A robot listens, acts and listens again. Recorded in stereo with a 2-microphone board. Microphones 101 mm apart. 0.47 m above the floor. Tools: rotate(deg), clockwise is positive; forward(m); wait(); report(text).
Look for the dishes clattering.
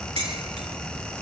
rotate(65)
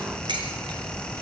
rotate(50)
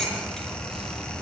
report("Found it: dishes clattering, straight ahead, over 4 m away.")